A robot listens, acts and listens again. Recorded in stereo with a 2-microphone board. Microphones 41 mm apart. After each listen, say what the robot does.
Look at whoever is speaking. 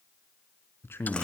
Turn 65° left.
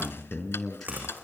Found it: a man speaking, straight ahead, over 4 m away.